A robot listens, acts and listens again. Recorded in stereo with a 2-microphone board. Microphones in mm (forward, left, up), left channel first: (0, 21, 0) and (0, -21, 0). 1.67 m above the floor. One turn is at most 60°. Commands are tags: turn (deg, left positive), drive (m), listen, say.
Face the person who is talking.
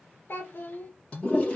<turn deg="55"/>
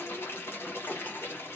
<listen/>
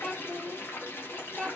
<turn deg="10"/>
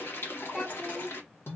<say>Facing the child speaking, 1 to 2 m away.</say>